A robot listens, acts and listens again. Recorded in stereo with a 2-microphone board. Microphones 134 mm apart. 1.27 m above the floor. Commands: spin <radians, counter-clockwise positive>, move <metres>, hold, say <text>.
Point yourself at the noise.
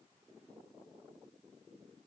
hold
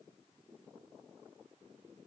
hold
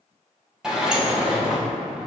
spin -0.52
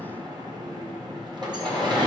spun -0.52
spin -2.53
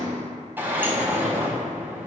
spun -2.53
spin -0.26
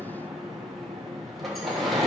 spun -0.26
say Found it: a sliding door, straight ahead, 1 to 2 m away.